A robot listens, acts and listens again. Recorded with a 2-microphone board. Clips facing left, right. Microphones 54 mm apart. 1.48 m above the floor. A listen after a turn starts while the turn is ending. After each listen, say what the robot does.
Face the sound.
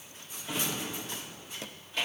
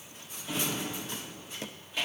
Turn 30° right.
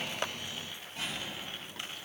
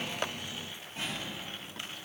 Turn 145° right.
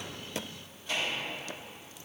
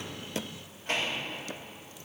Turn 55° right.
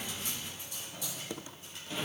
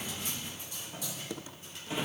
Turn 15° right.
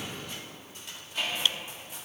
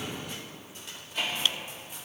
Facing the drawer, 1 to 2 m away.